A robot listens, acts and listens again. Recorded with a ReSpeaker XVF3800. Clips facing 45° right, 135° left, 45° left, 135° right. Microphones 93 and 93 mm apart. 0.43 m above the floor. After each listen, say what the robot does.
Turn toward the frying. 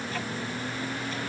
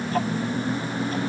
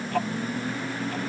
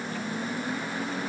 Keep listening.
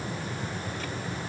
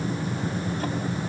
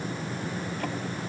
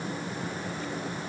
Keep listening.
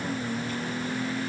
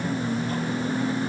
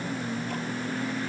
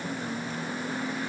I can't make out frying to turn to.